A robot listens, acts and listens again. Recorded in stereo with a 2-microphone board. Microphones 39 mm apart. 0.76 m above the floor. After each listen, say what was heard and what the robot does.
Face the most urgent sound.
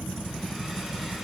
Keep listening.
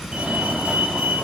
The fire alarm: about 35° right or 145° right. Turn 35° right.
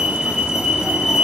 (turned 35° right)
So it is at 10° right. Turn 10° right.
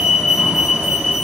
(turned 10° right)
Found it: a fire alarm, straight ahead, 2 to 4 m away.